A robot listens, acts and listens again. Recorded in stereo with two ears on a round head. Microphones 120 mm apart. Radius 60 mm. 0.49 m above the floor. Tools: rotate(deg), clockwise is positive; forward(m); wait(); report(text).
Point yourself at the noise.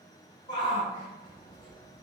rotate(-35)
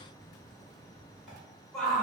report("Facing the shout, 1 to 2 m away.")